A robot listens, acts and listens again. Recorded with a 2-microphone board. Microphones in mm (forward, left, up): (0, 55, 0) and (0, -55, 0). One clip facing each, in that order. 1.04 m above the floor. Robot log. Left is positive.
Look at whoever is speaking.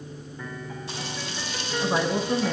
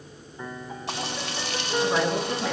cmd yaw +30
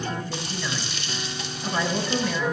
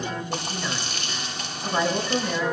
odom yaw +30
note: So it is at 20° right.
cmd yaw -20
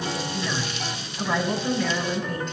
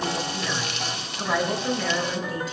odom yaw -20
end: Found it: a woman speaking, straight ahead.